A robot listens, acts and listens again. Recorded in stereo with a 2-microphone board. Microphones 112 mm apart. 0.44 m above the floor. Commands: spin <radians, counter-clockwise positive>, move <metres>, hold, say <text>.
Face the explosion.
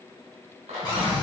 spin 1.57
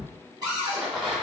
say Facing the explosion.